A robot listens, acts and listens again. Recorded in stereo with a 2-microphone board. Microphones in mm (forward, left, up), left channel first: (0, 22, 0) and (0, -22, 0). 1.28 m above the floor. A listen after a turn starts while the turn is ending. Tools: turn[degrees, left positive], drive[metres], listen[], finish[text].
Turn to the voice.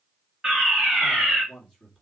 Action: turn[30]
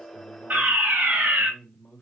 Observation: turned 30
Thought: So it is at 135° left.
Action: turn[135]
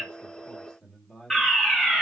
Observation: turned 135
Action: finish[Facing the man speaking, 2 to 4 m away.]